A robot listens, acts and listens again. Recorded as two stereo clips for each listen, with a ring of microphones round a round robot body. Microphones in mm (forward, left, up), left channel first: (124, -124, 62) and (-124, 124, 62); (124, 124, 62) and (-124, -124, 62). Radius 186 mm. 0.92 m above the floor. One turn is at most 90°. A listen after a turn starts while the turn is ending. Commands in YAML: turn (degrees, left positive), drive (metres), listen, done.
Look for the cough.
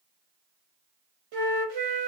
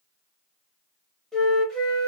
listen: true
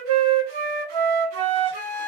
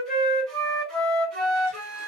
listen: true
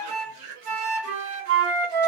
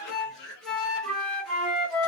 turn: 85
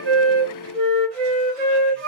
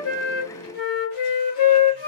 listen: true
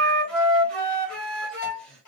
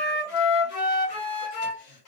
listen: true
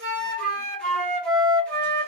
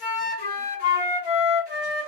done: "Facing where the cough came from. I can't hear it now."